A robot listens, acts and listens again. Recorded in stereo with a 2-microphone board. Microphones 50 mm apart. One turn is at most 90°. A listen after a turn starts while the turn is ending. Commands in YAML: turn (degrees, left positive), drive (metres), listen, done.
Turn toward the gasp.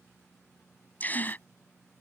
turn: 35
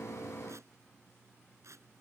listen: true
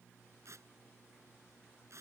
done: "I heard a gasp, but can't make it out now. It was about straight ahead or 110° left."